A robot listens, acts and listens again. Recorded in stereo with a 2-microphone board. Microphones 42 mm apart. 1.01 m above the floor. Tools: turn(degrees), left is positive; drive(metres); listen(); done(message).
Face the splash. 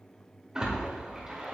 turn(degrees=-20)
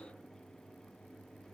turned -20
listen()
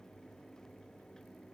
done("I heard a splash, but can't make it out now. It was about straight ahead or 140° right.")